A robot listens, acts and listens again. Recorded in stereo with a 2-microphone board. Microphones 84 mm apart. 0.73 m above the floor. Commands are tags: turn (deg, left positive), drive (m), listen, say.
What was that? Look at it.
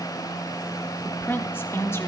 <turn deg="30"/>
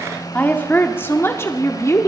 <turn deg="40"/>
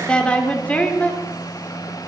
<turn deg="20"/>
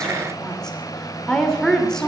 <turn deg="10"/>
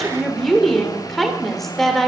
<say>Facing the woman speaking, 2 to 4 m away.</say>